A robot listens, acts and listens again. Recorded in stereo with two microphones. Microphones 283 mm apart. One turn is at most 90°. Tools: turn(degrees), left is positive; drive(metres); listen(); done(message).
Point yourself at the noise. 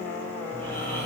turn(degrees=25)
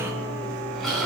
done("Facing the snoring.")